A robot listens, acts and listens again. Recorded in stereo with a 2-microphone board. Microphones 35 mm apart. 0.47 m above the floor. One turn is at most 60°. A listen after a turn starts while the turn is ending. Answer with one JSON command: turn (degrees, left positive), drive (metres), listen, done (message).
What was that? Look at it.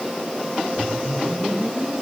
{"turn": -60}
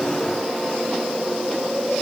{"done": "Found it: a whoosh, straight ahead."}